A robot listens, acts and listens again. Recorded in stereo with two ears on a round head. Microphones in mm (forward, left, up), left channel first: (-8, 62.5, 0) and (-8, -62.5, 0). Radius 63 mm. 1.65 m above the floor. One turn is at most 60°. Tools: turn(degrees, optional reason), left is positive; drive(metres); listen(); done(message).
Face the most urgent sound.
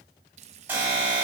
turn(degrees=-30)
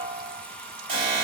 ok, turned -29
turn(degrees=-60, reason="So it is at 140° right.")
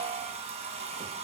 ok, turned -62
turn(degrees=-60, reason="The alarm is now 80° right.")
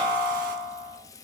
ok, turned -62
turn(degrees=-15, reason="The alarm is now 15° right.")
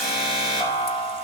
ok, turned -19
done("Facing the alarm, over 4 m away.")